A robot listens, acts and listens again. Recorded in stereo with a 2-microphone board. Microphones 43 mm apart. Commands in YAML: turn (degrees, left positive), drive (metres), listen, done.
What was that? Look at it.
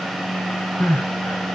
turn: 90
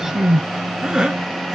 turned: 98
turn: -15
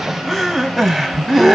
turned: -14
done: "Facing the crying, under 1 m away."